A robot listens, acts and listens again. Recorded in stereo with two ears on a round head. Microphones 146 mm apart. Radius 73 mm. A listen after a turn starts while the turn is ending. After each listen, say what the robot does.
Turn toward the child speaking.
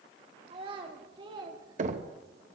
Turn 25° right.
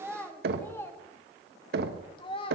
Turn 35° left.
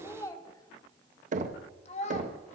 Turn 45° left.
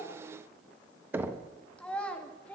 Turn 10° left.
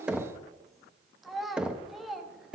Found it: a child speaking, straight ahead, 1 to 2 m away.